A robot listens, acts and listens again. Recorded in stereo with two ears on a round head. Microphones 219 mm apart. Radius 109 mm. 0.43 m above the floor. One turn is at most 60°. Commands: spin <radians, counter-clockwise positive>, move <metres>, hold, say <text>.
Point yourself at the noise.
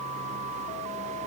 hold
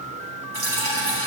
spin -1.05
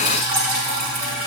spin -0.70
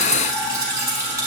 spin -0.26
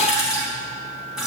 say Found it: dripping, straight ahead.